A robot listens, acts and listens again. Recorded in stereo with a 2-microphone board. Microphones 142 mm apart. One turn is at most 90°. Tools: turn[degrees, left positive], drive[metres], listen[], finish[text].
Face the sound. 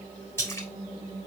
Thought: The splash: about 15° left or 165° left.
Action: turn[15]
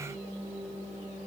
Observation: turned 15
Action: listen[]
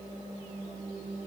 Action: finish[I heard a splash, but can't make it out now. It was about straight ahead or 150° left.]